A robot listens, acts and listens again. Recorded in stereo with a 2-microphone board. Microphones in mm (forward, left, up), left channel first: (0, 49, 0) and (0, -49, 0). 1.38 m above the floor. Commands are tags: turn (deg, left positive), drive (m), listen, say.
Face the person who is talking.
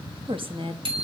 <turn deg="-55"/>
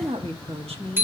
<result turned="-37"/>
<turn deg="-80"/>
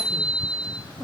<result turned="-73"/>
<turn deg="-30"/>
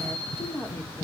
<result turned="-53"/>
<turn deg="15"/>
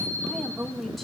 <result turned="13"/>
<say>Facing the woman speaking, 2 to 4 m away.</say>